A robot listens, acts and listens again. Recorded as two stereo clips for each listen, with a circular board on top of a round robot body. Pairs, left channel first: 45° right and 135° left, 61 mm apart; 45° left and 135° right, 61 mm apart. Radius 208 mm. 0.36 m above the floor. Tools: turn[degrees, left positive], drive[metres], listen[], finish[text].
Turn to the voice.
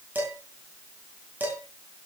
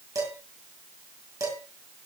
Action: listen[]
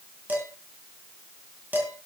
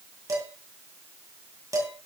Action: listen[]
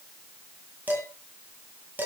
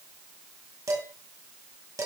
Action: finish[I can't make out anyone speaking to turn to.]